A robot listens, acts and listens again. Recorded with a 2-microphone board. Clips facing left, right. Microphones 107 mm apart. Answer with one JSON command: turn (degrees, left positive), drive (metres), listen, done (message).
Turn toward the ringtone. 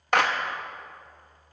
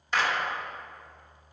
{"listen": true}
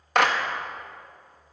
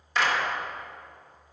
{"listen": true}
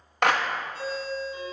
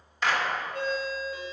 {"turn": -60}
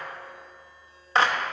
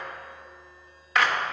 {"listen": true}
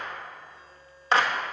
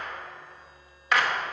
{"listen": true}
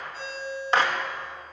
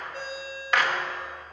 {"turn": -60}
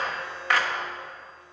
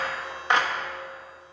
{"listen": true}
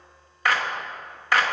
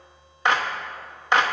{"listen": true}
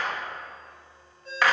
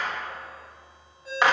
{"done": "Facing the ringtone."}